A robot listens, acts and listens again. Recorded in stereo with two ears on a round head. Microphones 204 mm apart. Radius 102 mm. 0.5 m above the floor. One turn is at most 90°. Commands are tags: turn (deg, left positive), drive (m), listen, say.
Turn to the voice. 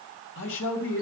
<turn deg="60"/>
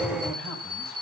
<listen/>
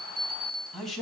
<say>Facing the man speaking, over 4 m away.</say>